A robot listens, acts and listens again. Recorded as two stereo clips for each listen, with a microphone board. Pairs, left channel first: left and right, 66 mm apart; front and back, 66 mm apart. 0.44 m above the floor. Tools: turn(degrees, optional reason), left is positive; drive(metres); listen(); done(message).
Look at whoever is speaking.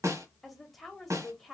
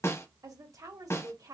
turn(degrees=180, reason="The woman speaking: straight behind.")
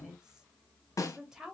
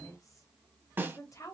turn(degrees=-10, reason="The woman speaking is now 10° right.")
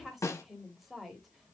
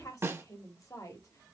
done("Facing the woman speaking, 1 to 2 m away.")